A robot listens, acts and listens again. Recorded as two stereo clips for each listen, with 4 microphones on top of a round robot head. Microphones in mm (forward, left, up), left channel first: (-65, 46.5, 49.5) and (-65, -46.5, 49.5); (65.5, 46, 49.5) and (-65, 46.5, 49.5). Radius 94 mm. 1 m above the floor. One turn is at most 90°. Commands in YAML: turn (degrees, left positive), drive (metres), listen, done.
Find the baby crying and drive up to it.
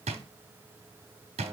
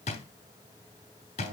listen: true
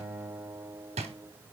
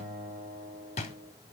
listen: true
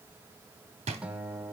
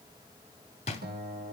done: "I can't make out a baby crying, only a guitar and a drawer."